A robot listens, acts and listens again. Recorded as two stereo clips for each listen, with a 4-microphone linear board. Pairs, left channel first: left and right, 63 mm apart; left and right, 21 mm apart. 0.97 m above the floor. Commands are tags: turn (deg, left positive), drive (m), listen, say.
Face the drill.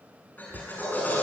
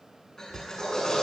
<turn deg="30"/>
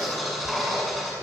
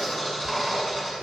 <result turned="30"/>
<say>Found it: a drill, straight ahead, over 4 m away.</say>